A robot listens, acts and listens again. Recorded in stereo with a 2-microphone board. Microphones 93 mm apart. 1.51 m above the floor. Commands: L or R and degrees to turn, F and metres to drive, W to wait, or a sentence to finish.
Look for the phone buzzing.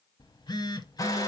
L50
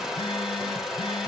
W
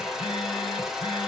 W
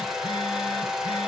I heard a phone buzzing, but can't make it out now. It was about straight ahead or 80° left.